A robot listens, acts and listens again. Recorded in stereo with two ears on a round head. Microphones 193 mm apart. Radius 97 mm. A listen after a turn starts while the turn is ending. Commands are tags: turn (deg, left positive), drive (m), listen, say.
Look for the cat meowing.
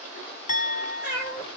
<turn deg="-30"/>
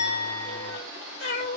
<turn deg="35"/>
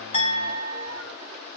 <listen/>
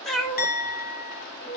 <turn deg="20"/>
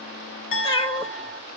<turn deg="20"/>
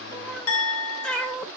<say>Facing the cat meowing, 1 to 2 m away.</say>